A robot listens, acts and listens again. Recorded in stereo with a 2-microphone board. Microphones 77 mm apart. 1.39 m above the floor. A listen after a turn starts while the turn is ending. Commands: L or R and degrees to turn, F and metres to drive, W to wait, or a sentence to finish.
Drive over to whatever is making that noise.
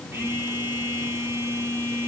R35
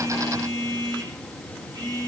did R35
R115
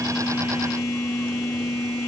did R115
F1.0
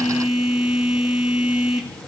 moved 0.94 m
F1.0
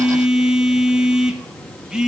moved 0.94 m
R10
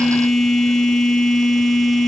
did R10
F1.0
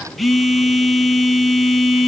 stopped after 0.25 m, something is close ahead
Arrived at the phone buzzing, straight ahead.